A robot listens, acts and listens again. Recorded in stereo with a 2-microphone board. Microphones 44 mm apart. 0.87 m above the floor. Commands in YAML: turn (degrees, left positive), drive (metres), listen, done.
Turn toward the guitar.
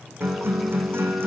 turn: -65
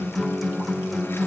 done: "Facing the guitar, over 4 m away."